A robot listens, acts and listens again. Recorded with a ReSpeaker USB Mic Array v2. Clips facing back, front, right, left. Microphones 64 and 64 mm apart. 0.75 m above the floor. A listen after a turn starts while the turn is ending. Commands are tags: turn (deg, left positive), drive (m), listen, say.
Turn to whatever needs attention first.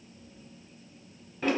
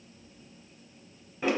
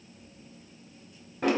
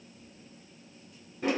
<listen/>
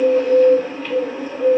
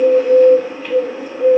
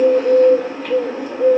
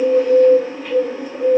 <listen/>
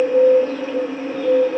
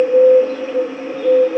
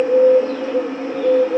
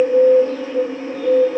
<say>I can't make out anything urgent, only a bird.</say>